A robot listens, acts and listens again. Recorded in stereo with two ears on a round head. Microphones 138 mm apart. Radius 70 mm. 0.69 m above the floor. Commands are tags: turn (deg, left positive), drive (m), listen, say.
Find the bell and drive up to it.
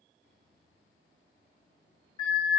<turn deg="35"/>
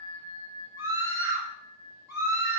<turn deg="100"/>
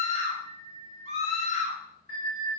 <turn deg="20"/>
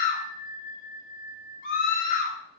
<drive m="1.0"/>
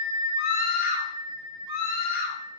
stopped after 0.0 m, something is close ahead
<say>Something is in my way. I am facing the bell but have not reached it.</say>